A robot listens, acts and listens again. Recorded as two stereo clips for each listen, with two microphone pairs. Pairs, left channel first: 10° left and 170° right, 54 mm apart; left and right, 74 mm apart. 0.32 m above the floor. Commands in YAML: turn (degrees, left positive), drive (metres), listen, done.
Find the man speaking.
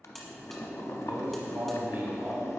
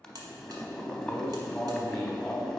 turn: 180
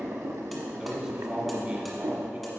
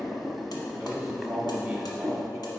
turn: -170
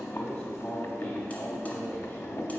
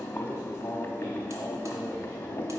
turn: 35
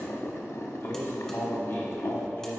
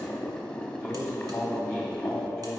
turn: 15
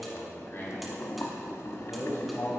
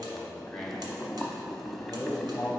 done: "Found it: a man speaking, straight ahead."